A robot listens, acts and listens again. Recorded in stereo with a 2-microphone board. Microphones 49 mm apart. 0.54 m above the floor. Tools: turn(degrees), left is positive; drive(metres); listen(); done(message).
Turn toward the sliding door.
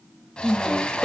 turn(degrees=20)
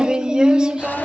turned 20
listen()
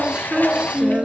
turn(degrees=140)
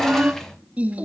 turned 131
done("Facing the sliding door.")